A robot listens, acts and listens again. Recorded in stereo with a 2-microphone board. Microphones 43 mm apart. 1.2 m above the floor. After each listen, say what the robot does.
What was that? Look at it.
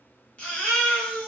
Turn 30° left.
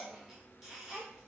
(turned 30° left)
Keep listening.
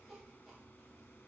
Keep listening.
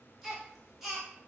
Facing the baby crying, 1 to 2 m away.